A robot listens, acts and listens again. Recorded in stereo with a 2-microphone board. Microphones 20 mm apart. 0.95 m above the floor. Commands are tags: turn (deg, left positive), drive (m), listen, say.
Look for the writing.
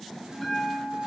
<listen/>
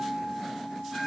<listen/>
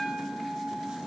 <say>I can't make out writing, only a bell.</say>